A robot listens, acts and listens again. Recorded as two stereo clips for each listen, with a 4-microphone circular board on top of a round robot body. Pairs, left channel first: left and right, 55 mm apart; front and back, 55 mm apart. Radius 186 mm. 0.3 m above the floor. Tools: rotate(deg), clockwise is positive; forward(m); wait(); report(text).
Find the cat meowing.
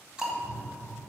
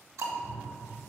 rotate(95)
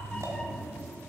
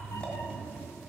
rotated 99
rotate(-10)
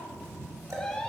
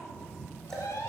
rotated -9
rotate(-15)
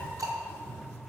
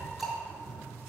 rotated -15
rotate(-15)
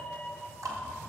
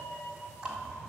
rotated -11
rotate(-10)
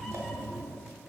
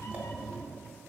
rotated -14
report("Facing the cat meowing, 1 to 2 m away.")